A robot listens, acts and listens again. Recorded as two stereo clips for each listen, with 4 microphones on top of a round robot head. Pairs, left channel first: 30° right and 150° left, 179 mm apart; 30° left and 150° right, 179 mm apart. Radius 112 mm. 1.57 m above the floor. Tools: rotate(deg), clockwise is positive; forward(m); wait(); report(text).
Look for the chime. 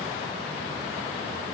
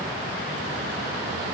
wait()
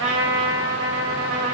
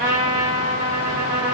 wait()
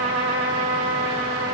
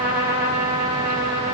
report("I can't make out a chime, only a trumpet.")